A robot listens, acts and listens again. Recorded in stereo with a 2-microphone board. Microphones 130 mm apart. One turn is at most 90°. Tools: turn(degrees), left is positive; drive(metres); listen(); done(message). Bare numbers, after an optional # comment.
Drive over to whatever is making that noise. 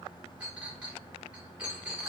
turn(-30)
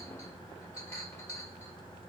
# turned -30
listen()
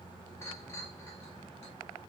listen()
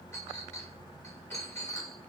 # So it is at 20° left.
turn(20)
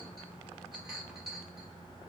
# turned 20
listen()
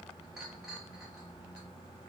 listen()
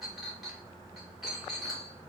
drive(1.0)
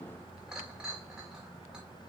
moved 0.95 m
drive(1.0)
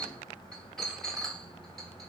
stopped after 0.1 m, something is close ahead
done("Arrived at the clink, straight ahead.")